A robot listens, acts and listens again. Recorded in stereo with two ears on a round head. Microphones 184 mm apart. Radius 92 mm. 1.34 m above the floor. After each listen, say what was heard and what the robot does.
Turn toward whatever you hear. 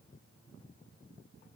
Keep listening.
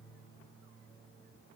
Keep listening.
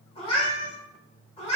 The cat meowing: about 30° left or 150° left. Turn 30° left.
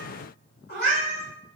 So it is at 120° left. Turn 120° left.
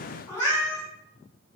The cat meowing is now 20° left. Turn 20° left.
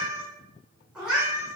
Facing the cat meowing.